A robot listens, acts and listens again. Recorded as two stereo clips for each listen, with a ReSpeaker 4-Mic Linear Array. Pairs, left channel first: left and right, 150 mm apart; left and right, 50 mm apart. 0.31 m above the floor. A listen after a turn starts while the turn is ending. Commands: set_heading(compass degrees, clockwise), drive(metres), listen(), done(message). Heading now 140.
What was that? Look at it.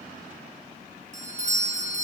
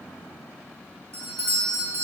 set_heading(190)
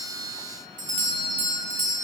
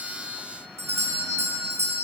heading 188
set_heading(263)
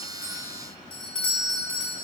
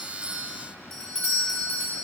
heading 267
done("Facing the doorbell, 2 to 4 m away.")